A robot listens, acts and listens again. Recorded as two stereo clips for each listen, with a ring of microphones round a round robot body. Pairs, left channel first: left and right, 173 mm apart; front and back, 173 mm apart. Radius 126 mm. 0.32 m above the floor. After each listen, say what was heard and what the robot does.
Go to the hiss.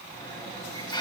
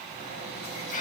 The hiss: 30° left. Turn 30° left.
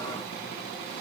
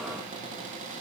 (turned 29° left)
Keep listening.
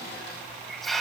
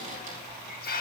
Drive 1.0 m forward.
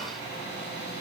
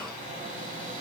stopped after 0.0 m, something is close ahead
Keep listening.
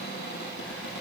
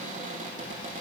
Keep listening.
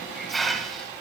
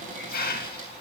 Something is in my way. I am facing the hiss but have not reached it.